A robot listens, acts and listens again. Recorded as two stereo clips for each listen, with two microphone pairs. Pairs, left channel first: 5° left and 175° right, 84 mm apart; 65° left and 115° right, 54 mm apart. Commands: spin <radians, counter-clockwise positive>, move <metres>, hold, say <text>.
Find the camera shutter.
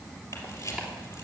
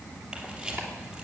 spin -0.79
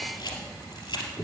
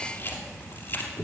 spin 0.35
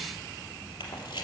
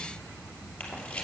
say Found it: a camera shutter, straight ahead.